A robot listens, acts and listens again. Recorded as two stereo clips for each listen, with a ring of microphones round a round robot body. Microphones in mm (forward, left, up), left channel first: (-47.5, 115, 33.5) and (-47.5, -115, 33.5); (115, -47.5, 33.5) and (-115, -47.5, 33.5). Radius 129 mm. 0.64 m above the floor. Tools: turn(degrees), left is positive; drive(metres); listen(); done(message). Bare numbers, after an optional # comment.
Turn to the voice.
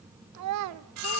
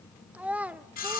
# The child speaking: 95° right.
turn(-95)
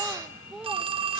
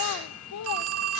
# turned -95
done("Found it: a child speaking, straight ahead.")